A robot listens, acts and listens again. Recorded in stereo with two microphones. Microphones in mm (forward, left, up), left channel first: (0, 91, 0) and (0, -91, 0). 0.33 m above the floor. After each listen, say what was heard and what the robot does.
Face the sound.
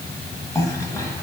The cough: about 15° left or 165° left. Turn 15° left.
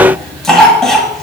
Facing the cough, 1 to 2 m away.